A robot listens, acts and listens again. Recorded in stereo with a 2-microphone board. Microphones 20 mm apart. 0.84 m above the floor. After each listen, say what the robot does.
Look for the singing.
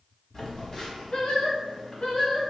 Turn 45° left.
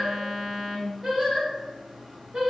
Turn 40° right.
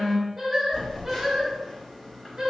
Turn 35° right.
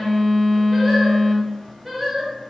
Turn 15° right.
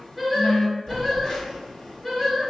Found it: singing, straight ahead.